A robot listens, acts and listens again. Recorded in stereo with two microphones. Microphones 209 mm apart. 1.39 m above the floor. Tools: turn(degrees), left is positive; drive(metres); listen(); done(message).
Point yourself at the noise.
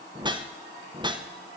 turn(degrees=-20)
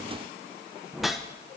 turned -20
done("Found it: a whoosh, straight ahead, 1 to 2 m away.")